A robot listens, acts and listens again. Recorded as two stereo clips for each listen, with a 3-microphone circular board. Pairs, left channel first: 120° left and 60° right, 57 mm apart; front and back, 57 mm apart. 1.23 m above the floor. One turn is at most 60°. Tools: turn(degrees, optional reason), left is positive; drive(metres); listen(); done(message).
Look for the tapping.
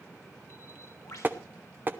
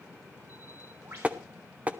turn(degrees=-60, reason="The tapping: 115° right.")
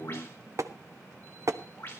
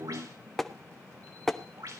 turn(degrees=-60, reason="The tapping is now 85° right.")
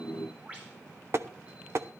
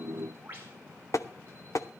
turn(degrees=-20, reason="The tapping is now 20° right.")
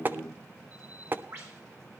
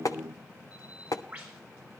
done("Found it: tapping, straight ahead.")